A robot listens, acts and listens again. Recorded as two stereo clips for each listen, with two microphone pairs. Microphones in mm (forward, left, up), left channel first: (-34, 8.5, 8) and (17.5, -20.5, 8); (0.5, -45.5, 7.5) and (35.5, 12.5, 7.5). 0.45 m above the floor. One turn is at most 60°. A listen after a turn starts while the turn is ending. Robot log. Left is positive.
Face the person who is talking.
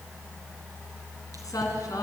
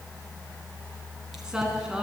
note: The woman speaking: 140° left.
cmd yaw +60
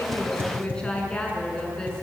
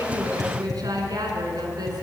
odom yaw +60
note: The woman speaking is now 75° left.
cmd yaw +60
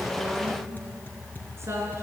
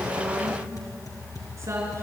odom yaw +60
note: The woman speaking is now 15° left.
cmd yaw +15
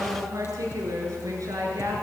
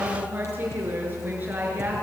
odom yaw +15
end: Found it: a woman speaking, straight ahead, over 4 m away.